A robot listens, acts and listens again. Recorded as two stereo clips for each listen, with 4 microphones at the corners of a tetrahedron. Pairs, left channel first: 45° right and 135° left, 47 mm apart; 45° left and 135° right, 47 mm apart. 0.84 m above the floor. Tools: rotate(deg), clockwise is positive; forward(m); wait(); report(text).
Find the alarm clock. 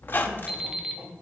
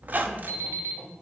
rotate(145)
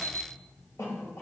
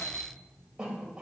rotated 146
report("Facing the alarm clock, 1 to 2 m away.")